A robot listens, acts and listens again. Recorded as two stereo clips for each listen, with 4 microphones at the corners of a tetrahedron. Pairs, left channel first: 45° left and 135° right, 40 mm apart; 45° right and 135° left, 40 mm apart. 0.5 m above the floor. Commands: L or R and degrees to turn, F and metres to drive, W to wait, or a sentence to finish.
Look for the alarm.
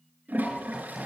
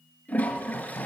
W
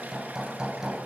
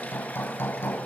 W
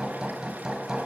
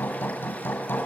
I can't make out an alarm to turn to.